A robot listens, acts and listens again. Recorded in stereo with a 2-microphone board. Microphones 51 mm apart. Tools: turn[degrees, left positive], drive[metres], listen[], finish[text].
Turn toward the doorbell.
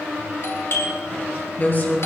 Thought: The doorbell: about 65° left or 115° left.
Action: turn[65]
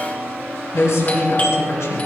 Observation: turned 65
Thought: So it is at 35° left.
Action: turn[35]
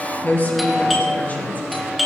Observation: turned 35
Action: finish[Found it: a doorbell, straight ahead.]